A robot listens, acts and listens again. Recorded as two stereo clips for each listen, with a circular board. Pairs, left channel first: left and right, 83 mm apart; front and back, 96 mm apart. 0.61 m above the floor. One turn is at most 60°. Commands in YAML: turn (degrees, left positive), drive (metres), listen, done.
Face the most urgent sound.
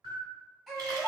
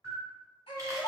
done: "Facing the baby crying."